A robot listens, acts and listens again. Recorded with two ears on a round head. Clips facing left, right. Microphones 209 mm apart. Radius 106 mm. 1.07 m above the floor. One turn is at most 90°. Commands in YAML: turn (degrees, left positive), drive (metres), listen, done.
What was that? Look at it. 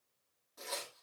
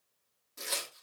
turn: -30
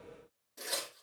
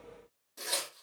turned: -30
done: "Found it: tearing paper, straight ahead, 2 to 4 m away."